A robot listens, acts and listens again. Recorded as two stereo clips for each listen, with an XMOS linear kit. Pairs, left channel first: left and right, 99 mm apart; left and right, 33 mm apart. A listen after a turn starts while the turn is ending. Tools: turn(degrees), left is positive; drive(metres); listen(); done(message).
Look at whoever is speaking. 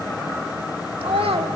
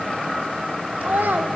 turn(degrees=-65)
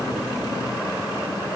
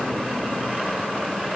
listen()
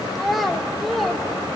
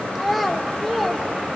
done("Facing the child speaking, 2 to 4 m away.")